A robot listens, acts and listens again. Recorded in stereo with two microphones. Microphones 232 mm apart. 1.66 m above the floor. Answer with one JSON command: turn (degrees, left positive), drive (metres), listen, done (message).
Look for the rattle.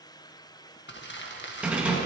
{"turn": -30}
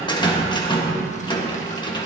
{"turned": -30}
{"turn": 25}
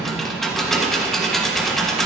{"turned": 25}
{"done": "Facing the rattle."}